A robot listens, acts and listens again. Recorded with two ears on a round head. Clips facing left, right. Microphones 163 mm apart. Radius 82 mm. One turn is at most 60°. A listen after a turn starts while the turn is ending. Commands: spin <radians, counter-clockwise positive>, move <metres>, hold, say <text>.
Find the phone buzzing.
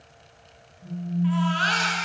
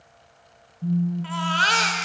spin -1.05
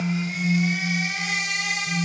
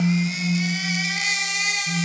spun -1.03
say Found it: a phone buzzing, straight ahead, 1 to 2 m away.